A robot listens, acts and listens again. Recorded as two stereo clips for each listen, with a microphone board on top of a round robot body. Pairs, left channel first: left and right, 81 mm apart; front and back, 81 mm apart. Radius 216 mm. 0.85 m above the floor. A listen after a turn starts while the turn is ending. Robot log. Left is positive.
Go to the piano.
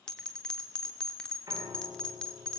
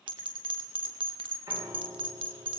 note: The piano: 140° right.
cmd yaw -140
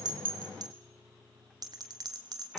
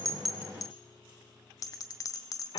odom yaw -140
cmd fwd 1.0
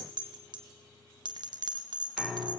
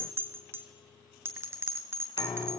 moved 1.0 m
cmd fwd 1.0
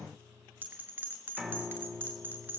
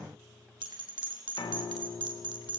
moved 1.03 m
note: The piano is now 10° right.
cmd yaw -10
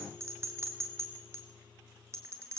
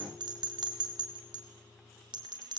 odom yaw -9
cmd fwd 1.0
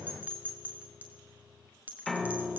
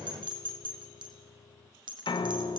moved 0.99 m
cmd fwd 1.0
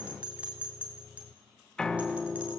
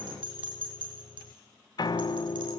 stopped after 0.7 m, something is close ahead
note: The piano is now 10° left.
cmd yaw +10
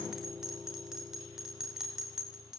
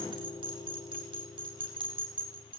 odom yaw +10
end: Arrived at the piano, straight ahead.